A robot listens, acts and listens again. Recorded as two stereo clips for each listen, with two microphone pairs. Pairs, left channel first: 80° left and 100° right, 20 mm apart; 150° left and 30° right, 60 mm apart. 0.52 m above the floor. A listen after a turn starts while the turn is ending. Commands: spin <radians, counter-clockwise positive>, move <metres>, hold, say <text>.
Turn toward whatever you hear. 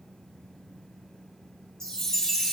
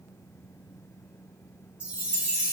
spin 0.61
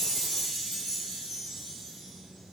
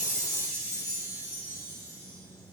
spin 0.17
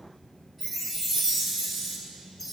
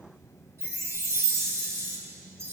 say Facing the chime, 2 to 4 m away.